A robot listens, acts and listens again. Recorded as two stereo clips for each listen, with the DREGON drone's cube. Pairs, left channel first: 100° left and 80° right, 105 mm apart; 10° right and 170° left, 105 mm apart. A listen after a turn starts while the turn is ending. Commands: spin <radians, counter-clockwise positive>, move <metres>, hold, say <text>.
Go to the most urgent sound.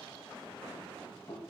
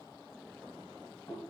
hold
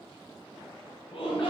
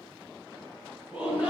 spin 1.57
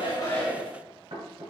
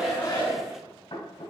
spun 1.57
move 1.0
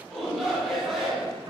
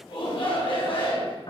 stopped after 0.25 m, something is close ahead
spin 0.17
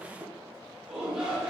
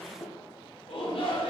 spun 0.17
say Blocked. The shout is further on, straight ahead.